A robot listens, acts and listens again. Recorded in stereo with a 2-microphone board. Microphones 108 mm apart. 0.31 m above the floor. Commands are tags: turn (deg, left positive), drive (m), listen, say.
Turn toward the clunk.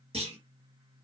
<turn deg="-70"/>
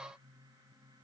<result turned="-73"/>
<listen/>
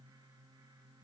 <say>I heard a clunk, but can't make it out now. It was about 5° left or 40° right.</say>